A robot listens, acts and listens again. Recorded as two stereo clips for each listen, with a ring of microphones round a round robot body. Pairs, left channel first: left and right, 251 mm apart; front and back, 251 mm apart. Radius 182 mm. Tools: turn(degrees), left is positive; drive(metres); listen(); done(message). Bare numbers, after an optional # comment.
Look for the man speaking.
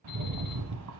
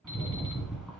listen()
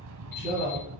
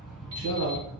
# The man speaking: 150° right.
turn(-150)
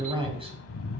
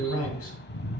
# The man speaking is now 20° right.
turn(-20)
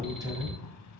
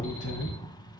# The man speaking is now 20° right.
turn(-20)
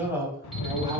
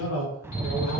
# The man speaking is now 10° right.
turn(-10)
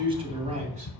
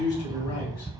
# The man speaking is now 25° right.
turn(-25)
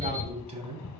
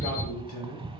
# The man speaking is now 25° right.
turn(-25)
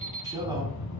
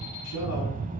listen()
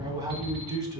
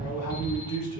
# The man speaking is now 15° right.
turn(-15)
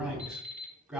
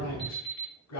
done("Found it: a man speaking, straight ahead.")